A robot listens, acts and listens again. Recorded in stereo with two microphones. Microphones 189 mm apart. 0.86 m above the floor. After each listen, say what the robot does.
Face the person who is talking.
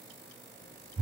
Keep listening.
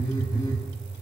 Keep listening.
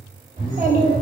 Turn 45° right.
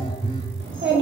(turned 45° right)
Turn 90° right.
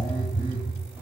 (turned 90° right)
Keep listening.
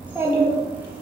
Turn 10° right.
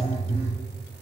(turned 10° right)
Keep listening.
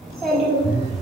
Found it: a child speaking, straight ahead.